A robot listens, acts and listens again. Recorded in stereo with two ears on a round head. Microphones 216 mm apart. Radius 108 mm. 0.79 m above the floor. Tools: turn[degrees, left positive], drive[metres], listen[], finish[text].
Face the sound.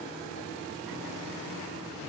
Action: listen[]
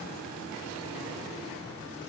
Action: listen[]
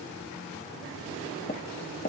Thought: The tapping: about 35° left or 145° left.
Action: turn[35]
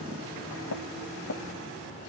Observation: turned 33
Thought: So it is at 110° left.
Action: turn[110]
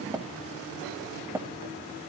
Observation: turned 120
Thought: The tapping is now 10° right.
Action: turn[-10]
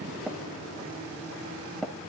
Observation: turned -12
Action: finish[Facing the tapping.]